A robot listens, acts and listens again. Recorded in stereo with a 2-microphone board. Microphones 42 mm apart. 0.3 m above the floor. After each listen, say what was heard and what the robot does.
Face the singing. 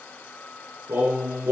Turn 90° right.
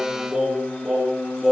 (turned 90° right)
Facing the singing, over 4 m away.